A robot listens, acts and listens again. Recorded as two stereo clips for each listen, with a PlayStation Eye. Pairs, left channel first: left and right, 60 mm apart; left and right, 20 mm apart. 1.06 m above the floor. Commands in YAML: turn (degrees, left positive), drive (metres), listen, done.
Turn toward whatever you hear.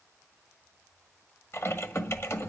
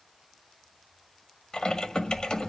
turn: 50
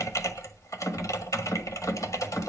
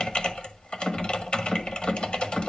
turn: 75
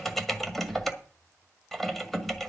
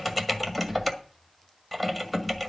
done: "Facing the typing on a keyboard, 1 to 2 m away."